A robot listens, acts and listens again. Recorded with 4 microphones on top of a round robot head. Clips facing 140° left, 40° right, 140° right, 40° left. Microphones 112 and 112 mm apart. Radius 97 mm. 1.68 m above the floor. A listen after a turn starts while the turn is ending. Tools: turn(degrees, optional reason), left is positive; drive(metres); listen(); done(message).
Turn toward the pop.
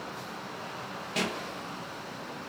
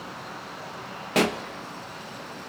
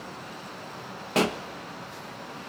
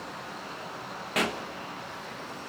turn(degrees=-80, reason="The pop: 80° right.")
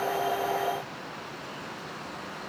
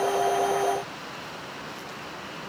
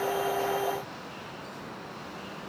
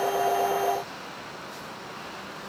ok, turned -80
done("I heard a pop from this way, but can't make it out now.")